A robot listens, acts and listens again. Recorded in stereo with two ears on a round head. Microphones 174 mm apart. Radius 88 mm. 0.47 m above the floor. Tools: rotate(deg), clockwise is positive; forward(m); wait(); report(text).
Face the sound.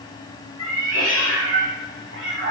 rotate(60)
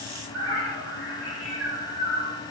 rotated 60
rotate(80)
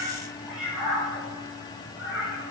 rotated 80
report("Found it: a cat meowing, straight ahead, 2 to 4 m away.")